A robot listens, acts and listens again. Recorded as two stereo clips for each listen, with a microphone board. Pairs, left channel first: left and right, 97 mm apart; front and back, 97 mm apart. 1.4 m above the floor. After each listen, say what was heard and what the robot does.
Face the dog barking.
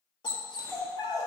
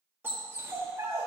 The dog barking: 125° left. Turn 125° left.
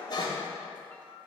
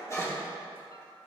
The dog barking is now 55° left. Turn 55° left.
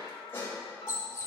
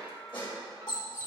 The dog barking is now 30° left. Turn 30° left.
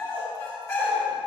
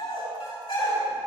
The dog barking is now 20° left. Turn 20° left.
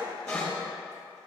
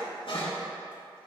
The dog barking is now 10° left. Turn 10° left.
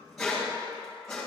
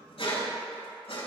Found it: a dog barking, straight ahead, over 4 m away.